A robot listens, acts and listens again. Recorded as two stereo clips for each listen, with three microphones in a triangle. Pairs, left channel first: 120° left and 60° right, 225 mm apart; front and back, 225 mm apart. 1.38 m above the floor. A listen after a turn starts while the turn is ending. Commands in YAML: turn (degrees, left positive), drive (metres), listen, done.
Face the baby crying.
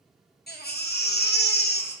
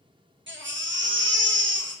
turn: 155
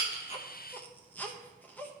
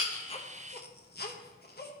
turn: 40
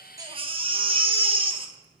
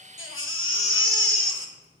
done: "Found it: a baby crying, straight ahead, 1 to 2 m away."